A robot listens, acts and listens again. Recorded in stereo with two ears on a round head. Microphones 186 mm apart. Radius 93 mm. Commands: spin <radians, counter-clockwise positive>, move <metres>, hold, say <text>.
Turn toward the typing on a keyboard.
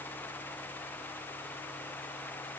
hold
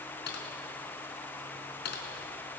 spin 0.96
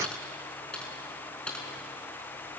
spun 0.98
say Facing the typing on a keyboard.